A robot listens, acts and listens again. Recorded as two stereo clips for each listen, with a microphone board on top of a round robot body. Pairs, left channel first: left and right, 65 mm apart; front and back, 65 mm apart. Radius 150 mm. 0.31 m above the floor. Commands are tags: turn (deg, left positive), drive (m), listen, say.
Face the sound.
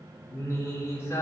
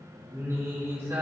<turn deg="135"/>
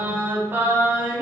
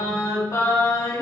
<turn deg="-30"/>
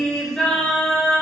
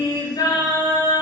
<turn deg="15"/>
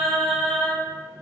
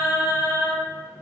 <turn deg="10"/>
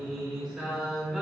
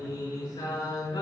<say>Facing the singing.</say>